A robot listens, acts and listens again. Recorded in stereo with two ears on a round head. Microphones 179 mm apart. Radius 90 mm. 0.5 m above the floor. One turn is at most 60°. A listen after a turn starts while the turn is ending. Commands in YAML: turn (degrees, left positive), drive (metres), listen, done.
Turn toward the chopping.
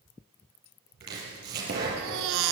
turn: -55
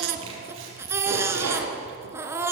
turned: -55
turn: -60
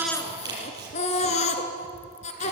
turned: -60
turn: -20
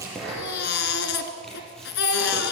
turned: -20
done: "Found it: chopping, straight ahead."